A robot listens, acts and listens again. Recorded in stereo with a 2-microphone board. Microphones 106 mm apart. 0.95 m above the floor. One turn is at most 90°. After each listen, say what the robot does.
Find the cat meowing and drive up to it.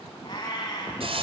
Turn 40° left.
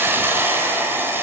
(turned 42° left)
Keep listening.
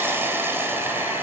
Keep listening.
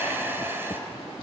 I heard a cat meowing, but can't make it out now. It was about straight ahead or 95° left. I did not reach it.